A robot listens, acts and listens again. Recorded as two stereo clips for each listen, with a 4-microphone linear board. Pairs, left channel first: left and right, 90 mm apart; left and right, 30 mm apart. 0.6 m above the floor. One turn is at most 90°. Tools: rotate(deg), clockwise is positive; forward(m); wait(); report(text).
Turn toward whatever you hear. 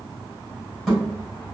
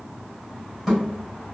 rotate(-30)
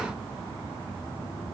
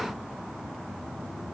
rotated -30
wait()
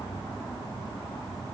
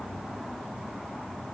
report("I heard a thud, but can't make it out now. It was about 30° right or 150° left.")